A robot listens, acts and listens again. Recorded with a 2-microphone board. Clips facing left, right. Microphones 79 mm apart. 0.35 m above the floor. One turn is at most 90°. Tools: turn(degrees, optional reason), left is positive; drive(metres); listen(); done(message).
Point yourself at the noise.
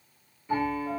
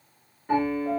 turn(degrees=-65, reason="The piano: about 65° right or 115° right.")
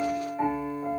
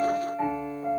done("Facing the piano.")